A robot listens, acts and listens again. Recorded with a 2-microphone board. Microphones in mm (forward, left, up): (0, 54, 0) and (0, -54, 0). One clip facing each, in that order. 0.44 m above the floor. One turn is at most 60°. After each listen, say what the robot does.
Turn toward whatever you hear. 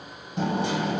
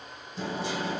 Turn 60° left.
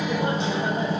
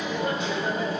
Turn 35° left.
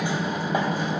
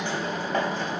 Turn 15° left.
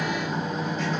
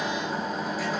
Facing the hammering, 2 to 4 m away.